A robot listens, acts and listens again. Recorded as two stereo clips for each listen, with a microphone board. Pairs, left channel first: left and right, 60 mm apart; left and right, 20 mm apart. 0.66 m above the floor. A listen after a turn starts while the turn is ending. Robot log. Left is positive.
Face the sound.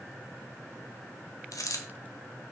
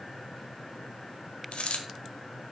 note: The dropped coin: about 75° left or 105° left.
cmd yaw +75
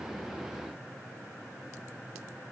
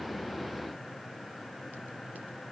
cmd idle
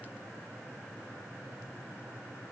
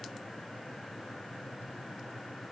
end: I heard a dropped coin, but can't make it out now. It was about straight ahead or 30° left.